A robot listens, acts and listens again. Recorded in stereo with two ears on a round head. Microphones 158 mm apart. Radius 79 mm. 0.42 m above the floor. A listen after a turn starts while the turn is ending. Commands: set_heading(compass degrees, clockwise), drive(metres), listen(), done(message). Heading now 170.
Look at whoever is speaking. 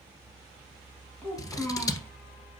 set_heading(140)
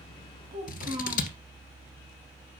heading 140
set_heading(165)
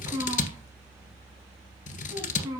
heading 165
set_heading(185)
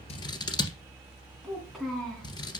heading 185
done("Found it: a child speaking, straight ahead.")